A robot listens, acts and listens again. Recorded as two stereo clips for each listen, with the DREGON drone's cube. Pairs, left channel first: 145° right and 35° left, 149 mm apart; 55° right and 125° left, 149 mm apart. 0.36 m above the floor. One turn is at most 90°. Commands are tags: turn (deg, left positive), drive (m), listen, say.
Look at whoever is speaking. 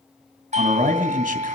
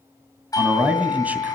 <turn deg="45"/>
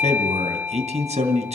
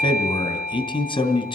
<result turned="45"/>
<say>Found it: a man speaking, straight ahead.</say>